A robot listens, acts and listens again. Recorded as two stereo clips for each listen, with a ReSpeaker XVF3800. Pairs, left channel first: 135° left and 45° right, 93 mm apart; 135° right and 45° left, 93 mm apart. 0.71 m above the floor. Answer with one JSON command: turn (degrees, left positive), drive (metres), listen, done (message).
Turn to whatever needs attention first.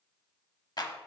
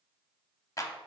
{"listen": true}
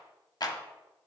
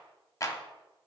{"listen": true}
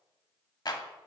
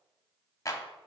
{"done": "I can't make out anything urgent to turn to."}